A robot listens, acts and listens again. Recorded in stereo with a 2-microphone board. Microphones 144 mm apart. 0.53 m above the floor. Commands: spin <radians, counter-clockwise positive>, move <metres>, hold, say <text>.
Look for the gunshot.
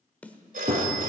spin -0.79
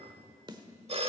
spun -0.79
hold
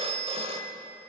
say I heard a gunshot, but can't make it out now. It was about straight ahead or 90° right.